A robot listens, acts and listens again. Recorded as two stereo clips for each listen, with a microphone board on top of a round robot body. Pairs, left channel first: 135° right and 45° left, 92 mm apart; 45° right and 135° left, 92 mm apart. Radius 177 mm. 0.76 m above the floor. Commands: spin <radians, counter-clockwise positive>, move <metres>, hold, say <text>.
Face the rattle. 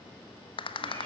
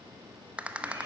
spin -2.62
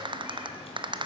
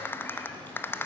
spin 0.35
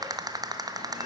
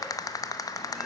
say Found it: a rattle, straight ahead, 1 to 2 m away.